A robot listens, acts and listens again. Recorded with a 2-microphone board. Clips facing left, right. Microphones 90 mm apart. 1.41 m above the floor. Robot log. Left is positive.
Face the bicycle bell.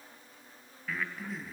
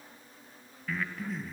cmd idle
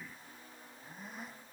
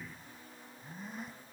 cmd idle
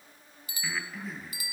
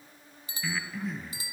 note: The bicycle bell: about 30° right or 150° right.
cmd yaw -30
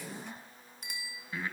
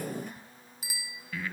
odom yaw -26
end: Found it: a bicycle bell, straight ahead.